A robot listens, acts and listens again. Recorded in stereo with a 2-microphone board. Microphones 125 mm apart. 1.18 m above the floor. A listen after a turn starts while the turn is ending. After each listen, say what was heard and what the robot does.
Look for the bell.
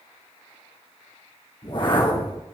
Keep listening.
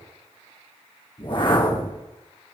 Keep listening.
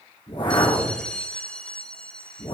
Turn 30° left.
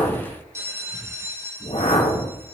So it is at 20° right. Turn 20° right.
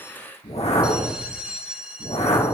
Found it: a bell, straight ahead, under 1 m away.